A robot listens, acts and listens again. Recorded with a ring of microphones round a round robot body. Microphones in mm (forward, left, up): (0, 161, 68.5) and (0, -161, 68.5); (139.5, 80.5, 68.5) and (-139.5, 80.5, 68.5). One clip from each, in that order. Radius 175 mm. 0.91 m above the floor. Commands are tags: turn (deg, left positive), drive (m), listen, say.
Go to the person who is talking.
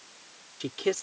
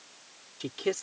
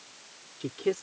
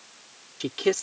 <turn deg="180"/>
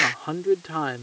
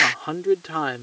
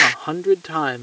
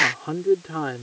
<turn deg="-25"/>
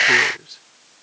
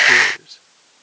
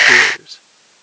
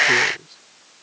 <drive m="1.0"/>
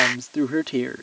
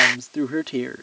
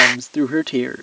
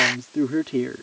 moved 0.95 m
<drive m="1.0"/>
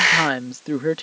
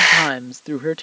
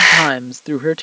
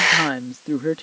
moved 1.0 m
<turn deg="-10"/>
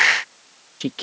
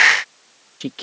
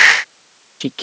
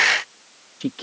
<drive m="1.0"/>
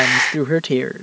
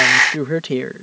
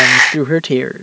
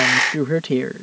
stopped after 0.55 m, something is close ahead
<say>Arrived at the man speaking, straight ahead.</say>